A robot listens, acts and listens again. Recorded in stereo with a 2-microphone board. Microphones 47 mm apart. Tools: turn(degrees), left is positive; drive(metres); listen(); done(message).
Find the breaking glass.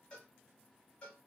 listen()
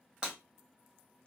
turn(degrees=-25)
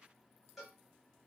listen()
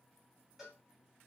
done("I heard breaking glass, but can't make it out now. It was about straight ahead or 130° right.")